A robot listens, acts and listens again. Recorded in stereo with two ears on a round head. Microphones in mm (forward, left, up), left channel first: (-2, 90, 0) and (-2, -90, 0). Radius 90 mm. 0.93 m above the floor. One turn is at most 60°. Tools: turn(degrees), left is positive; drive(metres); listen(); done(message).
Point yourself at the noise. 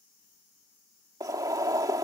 turn(degrees=-20)
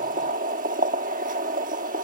turn(degrees=-60)
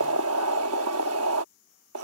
turn(degrees=-60)
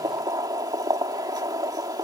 turn(degrees=-20)
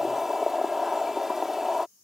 done("Facing the boiling.")